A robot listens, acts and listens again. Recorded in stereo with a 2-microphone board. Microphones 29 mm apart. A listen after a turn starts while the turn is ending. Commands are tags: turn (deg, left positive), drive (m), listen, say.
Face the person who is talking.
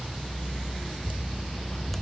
<listen/>
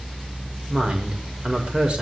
<turn deg="-40"/>
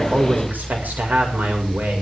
<turn deg="-100"/>
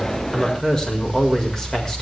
<turn deg="20"/>
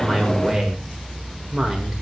<say>Facing the woman speaking.</say>